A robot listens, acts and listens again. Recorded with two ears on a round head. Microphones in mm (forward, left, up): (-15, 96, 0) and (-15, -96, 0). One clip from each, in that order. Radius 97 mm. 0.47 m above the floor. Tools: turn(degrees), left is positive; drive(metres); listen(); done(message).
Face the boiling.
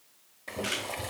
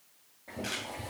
turn(degrees=70)
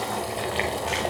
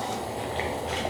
turn(degrees=30)
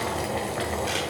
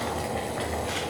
done("Facing the boiling, 1 to 2 m away.")